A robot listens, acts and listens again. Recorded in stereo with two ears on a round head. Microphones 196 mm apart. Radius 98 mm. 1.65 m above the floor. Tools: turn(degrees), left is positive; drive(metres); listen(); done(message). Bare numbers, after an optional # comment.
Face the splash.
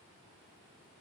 listen()
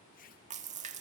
# The splash: about 35° right or 145° right.
turn(-35)
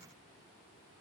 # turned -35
listen()
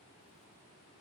done("I heard a splash, but can't make it out now. It was about straight ahead or 110° right.")